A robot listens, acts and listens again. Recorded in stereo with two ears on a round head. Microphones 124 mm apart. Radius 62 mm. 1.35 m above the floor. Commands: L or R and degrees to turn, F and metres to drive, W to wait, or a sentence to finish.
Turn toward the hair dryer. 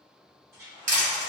R25
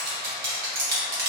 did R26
W
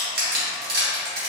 W
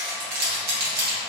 I heard a hair dryer, but can't make it out now. It was about straight ahead or 130° right.